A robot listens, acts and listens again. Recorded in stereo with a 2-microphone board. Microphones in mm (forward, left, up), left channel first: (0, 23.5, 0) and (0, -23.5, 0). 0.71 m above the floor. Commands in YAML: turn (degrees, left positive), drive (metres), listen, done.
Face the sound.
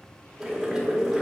turn: -30
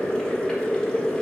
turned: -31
turn: 20
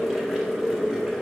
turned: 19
done: "Found it: boiling, straight ahead, under 1 m away."